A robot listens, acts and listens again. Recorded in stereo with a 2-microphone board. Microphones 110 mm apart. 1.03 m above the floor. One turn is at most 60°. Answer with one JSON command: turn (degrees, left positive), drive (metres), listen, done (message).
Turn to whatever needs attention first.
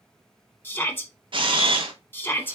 {"turn": 20}
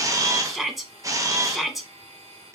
{"done": "Facing the shout."}